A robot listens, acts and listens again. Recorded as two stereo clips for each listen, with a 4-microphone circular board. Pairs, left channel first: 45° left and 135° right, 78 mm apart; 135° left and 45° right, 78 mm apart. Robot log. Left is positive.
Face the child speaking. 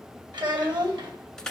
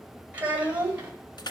note: The child speaking: 115° right.
cmd yaw -115
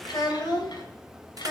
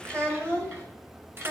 note: The child speaking is now 10° left.
cmd yaw +10
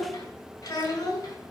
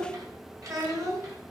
end: Facing the child speaking.